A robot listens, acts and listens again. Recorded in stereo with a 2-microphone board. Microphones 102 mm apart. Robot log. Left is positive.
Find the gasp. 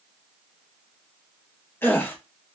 note: The gasp: about 20° left or 160° left.
cmd yaw +20
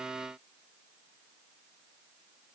cmd idle
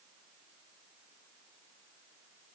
end: I heard a gasp, but can't make it out now. It was about straight ahead or 140° left.